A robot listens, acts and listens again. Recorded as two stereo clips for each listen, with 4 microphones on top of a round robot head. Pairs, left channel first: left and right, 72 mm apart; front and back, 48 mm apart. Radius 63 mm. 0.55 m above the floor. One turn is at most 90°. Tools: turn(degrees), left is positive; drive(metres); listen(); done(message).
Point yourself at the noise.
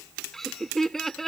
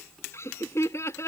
done("Found it: laughter, straight ahead.")